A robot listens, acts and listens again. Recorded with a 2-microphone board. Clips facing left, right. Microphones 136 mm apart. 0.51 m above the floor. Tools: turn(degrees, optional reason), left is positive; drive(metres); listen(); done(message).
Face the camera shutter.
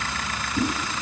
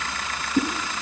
listen()
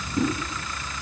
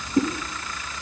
listen()
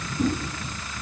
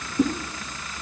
done("I can't make out a camera shutter, only a whoosh.")